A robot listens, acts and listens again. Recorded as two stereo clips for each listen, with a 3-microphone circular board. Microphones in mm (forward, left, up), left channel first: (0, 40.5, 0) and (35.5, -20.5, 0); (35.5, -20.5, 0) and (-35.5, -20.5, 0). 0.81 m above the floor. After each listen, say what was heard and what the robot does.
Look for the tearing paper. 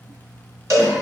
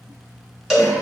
Keep listening.
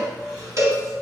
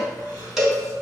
Keep listening.
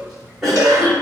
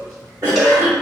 I can't make out tearing paper, only a cowbell and a cough.